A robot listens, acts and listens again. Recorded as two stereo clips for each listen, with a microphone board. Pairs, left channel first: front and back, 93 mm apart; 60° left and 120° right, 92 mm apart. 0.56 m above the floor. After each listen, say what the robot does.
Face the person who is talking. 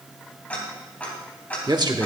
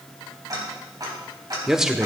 Turn 155° left.
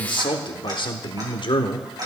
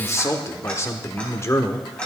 Facing the man speaking, 1 to 2 m away.